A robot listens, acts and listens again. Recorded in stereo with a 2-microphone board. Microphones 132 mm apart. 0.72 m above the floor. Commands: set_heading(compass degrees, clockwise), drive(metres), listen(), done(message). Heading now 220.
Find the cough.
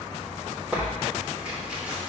listen()
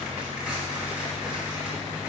listen()
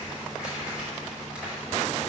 done("I can't make out a cough, only tearing paper.")